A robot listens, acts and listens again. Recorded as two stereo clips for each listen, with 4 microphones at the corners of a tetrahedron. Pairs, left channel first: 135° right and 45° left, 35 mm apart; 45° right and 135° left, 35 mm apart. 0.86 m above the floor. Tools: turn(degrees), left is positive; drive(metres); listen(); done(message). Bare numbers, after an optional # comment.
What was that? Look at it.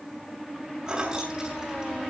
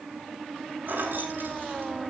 # The keys jangling: 115° left.
turn(115)
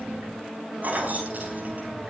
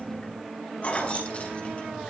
done("Found it: keys jangling, straight ahead, over 4 m away.")